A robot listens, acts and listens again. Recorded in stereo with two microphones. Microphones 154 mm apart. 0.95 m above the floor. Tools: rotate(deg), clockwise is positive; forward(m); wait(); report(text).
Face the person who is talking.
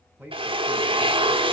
rotate(30)
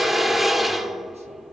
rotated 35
wait()
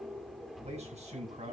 rotate(135)
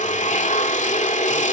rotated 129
wait()
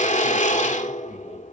wait()
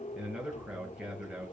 report("Facing the man speaking.")